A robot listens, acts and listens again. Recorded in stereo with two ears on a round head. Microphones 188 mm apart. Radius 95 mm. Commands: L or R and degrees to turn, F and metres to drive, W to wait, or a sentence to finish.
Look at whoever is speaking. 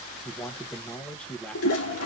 L30
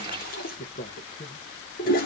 L145
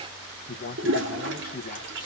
L40
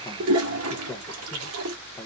W
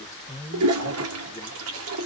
L15
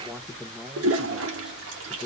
Facing the man speaking.